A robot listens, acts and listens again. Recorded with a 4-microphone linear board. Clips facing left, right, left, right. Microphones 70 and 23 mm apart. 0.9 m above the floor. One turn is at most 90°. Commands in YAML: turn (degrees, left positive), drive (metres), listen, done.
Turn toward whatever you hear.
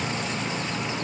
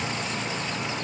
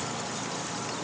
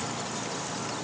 listen: true
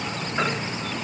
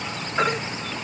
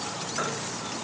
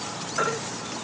turn: -30
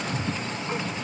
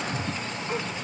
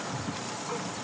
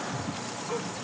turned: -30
listen: true
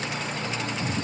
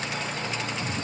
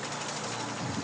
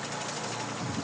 listen: true
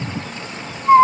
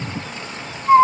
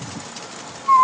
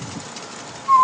turn: 20
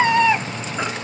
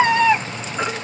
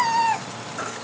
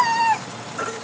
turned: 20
done: "Found it: a baby crying, straight ahead, 1 to 2 m away."